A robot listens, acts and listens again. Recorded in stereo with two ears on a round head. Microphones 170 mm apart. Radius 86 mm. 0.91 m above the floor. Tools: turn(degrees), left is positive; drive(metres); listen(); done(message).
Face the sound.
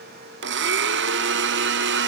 turn(degrees=-60)
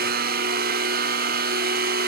turn(degrees=-50)
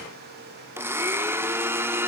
turn(degrees=-10)
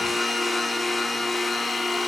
done("Found it: a blender, straight ahead, under 1 m away.")